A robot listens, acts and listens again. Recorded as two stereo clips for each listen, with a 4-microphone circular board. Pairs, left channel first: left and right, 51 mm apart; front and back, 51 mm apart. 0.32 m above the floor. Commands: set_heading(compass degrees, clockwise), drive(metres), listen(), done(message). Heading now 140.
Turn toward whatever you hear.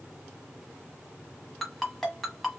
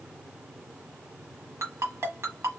set_heading(325)
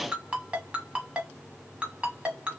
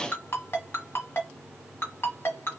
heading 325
set_heading(350)
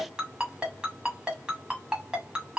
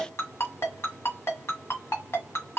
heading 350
set_heading(10)
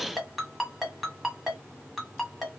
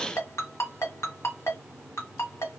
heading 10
done("Found it: a ringtone, straight ahead, 1 to 2 m away.")